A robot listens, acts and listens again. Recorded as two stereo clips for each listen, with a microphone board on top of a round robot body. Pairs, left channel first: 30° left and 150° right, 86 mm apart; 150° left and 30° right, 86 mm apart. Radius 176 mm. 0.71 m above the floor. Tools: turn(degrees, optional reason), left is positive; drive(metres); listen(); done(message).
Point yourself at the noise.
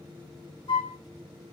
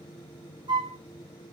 done("Found it: a flute, straight ahead.")